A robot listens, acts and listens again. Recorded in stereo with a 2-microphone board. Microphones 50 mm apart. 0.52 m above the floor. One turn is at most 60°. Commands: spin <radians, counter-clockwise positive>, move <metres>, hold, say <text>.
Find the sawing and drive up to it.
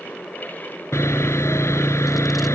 spin 1.05
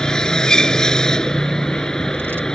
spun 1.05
spin 0.26
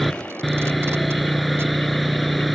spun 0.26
move 1.0
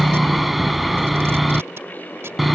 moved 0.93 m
move 1.0
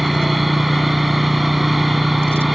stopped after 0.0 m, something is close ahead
say I am next to the sawing.